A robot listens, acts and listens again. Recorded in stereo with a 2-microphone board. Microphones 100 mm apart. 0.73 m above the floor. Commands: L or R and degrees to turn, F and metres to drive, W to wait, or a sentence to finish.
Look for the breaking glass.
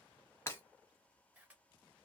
L25
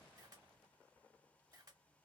W
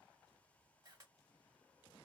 I heard breaking glass, but can't make it out now. It was about straight ahead or 130° left.